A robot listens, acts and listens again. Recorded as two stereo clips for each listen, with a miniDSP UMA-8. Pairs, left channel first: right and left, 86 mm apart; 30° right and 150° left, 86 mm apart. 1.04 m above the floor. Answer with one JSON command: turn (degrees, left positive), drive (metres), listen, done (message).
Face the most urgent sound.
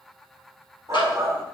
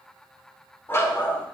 {"turn": 35}
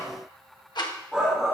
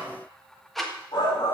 {"done": "Found it: a shout, straight ahead."}